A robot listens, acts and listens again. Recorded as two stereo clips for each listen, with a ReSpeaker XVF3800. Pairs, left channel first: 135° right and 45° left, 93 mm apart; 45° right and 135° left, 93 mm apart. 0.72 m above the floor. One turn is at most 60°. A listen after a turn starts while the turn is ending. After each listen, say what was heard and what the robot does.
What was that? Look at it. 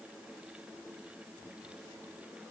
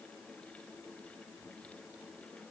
Keep listening.
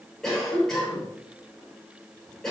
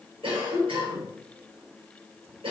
The cough: 140° left. Turn 60° left.
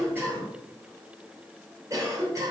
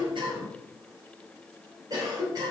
The cough is now 95° left. Turn 60° left.
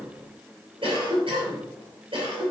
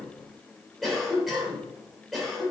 The cough is now 45° left. Turn 45° left.
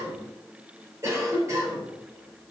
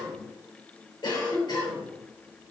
The cough is now 10° right. Turn 10° right.
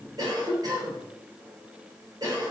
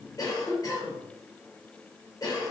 Found it: a cough, straight ahead, 2 to 4 m away.